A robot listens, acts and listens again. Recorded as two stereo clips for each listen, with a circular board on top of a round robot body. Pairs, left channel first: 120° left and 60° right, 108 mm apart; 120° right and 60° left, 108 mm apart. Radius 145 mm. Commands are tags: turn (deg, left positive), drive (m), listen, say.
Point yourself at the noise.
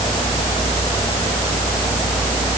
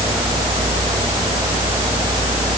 <listen/>
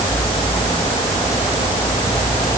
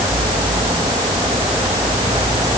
<listen/>
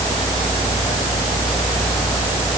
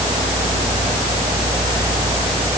<say>I can't make out anything to turn to.</say>